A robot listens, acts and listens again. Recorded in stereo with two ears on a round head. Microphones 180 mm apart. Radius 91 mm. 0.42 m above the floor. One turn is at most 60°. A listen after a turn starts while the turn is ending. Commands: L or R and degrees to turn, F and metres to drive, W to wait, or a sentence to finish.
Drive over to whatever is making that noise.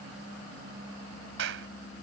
R60
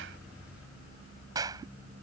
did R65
R20
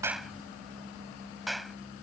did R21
F1.0
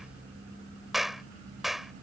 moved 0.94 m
F1.0
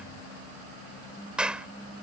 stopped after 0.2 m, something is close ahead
I am next to the clap.